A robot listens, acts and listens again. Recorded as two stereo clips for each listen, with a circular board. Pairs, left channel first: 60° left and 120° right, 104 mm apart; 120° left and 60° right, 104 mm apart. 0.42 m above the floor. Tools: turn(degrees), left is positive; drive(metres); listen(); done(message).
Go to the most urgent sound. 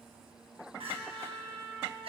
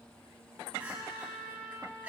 turn(degrees=-135)
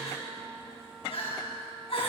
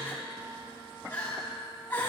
turn(degrees=50)
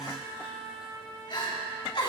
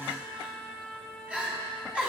turn(degrees=20)
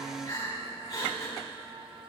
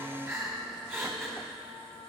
drive(metres=1.0)
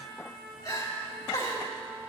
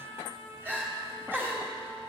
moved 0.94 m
turn(degrees=10)
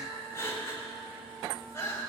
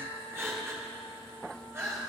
drive(metres=1.0)
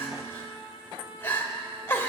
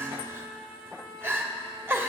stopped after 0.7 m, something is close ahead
done("Arrived at the crying, straight ahead.")